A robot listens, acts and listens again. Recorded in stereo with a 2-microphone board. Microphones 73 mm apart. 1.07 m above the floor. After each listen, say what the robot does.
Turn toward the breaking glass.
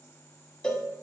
Keep listening.
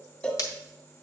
Turn 60° left.
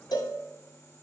Keep listening.
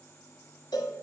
I heard breaking glass, but can't make it out now. It was about straight ahead or 60° left.